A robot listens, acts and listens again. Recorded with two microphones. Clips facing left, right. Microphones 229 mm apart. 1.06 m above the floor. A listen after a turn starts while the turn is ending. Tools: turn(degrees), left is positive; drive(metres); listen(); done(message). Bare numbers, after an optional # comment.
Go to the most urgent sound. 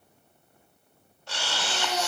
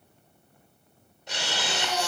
# The baby crying: about 25° left or 155° left.
turn(25)
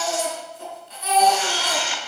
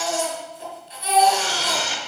# So it is at 130° left.
turn(130)
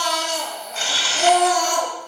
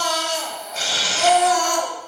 # The baby crying is now 40° left.
turn(40)
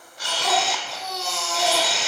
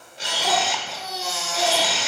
drive(1.0)
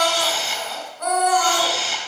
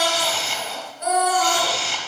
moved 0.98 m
# The baby crying is now 10° right.
turn(-10)
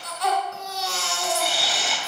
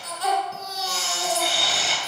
drive(1.0)
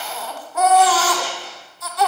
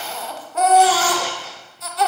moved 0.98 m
drive(1.0)
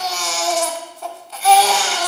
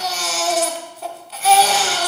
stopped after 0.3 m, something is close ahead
done("I am next to the baby crying.")